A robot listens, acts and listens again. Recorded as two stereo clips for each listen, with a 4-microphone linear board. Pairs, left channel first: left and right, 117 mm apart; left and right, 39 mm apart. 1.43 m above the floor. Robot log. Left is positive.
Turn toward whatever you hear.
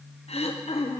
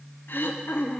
note: The throat clearing: about 60° left or 120° left.
cmd yaw +60
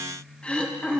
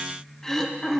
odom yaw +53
note: So it is at 10° left.
cmd yaw +10
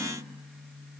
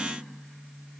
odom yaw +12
cmd idle
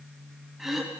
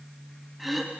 end: Found it: throat clearing, straight ahead.